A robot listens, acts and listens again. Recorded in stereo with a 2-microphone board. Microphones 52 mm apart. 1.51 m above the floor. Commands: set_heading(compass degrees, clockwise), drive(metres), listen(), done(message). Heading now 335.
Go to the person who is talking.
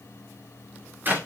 listen()
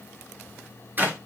listen()
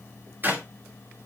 done("I can't make out anyone speaking, only a clap.")